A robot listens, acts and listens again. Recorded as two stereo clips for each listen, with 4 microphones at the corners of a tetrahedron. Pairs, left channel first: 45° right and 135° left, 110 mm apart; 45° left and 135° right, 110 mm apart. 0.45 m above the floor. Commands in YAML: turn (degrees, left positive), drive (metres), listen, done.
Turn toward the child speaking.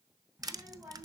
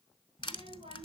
turn: -145
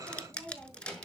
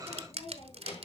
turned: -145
turn: 45
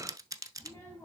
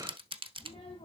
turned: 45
turn: 25
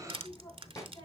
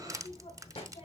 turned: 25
turn: 15
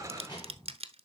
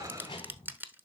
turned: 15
done: "Facing the child speaking, 2 to 4 m away."